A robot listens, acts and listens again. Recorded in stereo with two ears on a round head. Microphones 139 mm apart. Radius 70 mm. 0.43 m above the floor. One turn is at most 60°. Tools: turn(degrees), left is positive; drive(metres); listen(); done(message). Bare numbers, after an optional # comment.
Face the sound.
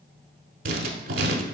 # The writing: about 60° right or 120° right.
turn(-60)
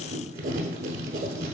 # So it is at 55° right.
turn(-55)
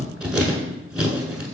done("Found it: writing, straight ahead, under 1 m away.")